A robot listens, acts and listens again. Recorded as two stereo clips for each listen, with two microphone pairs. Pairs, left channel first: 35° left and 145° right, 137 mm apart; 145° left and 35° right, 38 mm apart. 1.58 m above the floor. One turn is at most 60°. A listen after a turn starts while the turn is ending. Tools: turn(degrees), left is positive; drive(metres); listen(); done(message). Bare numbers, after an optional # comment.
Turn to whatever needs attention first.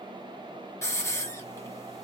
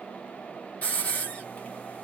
listen()
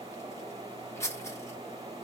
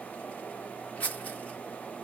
listen()
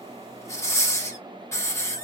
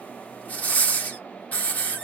done("I can't make out anything urgent, only a hiss.")